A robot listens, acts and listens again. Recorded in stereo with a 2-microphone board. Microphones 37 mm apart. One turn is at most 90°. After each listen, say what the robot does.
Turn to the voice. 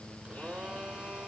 Keep listening.
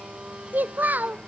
Turn 50° right.
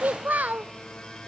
Turn 65° right.
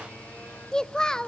Turn 25° left.
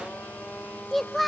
Facing the child speaking.